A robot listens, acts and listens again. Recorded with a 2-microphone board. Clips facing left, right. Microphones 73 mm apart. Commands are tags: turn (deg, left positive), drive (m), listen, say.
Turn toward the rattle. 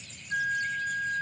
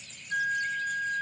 <listen/>
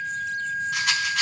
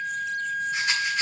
<turn deg="90"/>
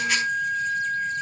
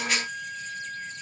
<listen/>
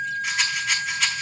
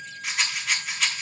<say>Found it: a rattle, straight ahead.</say>